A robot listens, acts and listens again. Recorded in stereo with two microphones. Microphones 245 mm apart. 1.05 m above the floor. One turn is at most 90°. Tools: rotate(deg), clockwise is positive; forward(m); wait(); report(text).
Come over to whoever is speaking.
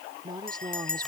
rotate(15)
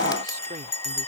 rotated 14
wait()
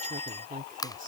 rotate(90)
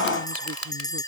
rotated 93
rotate(55)
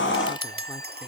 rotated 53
wait()
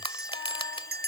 report("I heard a woman speaking from this way, but can't make it out now. I did not reach it.")